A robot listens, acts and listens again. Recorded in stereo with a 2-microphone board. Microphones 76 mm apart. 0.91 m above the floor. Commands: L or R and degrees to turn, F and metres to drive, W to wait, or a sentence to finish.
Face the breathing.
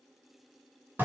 W
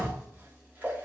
W
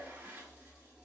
I can't make out breathing to turn to.